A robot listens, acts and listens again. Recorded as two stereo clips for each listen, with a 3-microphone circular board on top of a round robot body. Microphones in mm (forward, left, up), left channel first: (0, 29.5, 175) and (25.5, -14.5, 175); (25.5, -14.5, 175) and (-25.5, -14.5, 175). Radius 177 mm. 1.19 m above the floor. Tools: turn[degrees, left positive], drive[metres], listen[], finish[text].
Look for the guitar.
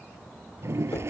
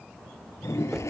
Action: listen[]
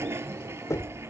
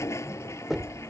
Action: listen[]
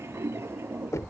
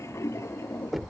Action: finish[I can't make out a guitar, only knocking and a toilet flushing.]